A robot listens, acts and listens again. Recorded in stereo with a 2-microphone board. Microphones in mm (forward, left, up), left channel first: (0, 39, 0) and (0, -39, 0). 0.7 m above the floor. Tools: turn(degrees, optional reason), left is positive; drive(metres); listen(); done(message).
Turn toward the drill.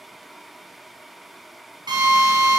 turn(degrees=-90)
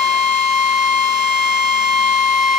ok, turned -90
turn(degrees=-10, reason="So it is at 10° right.")
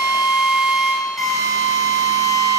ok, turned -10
done("Facing the drill, over 4 m away.")